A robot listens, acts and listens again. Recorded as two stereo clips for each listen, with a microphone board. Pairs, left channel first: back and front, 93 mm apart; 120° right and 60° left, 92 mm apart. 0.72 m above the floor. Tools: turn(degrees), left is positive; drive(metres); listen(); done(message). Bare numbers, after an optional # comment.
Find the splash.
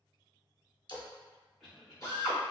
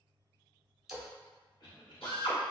# The splash: 145° left.
turn(145)
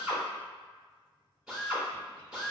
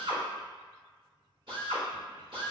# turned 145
done("I heard a splash from this way, but can't make it out now.")